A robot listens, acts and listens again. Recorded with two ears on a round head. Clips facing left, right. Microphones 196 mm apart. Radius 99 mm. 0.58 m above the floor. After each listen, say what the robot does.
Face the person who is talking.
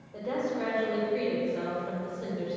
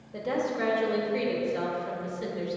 Turn 25° right.
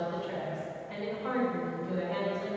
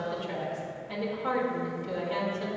Turn 125° right.
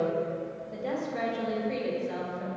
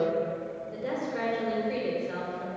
Turn 15° right.
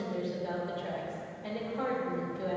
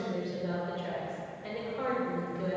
Found it: a woman speaking, straight ahead, 1 to 2 m away.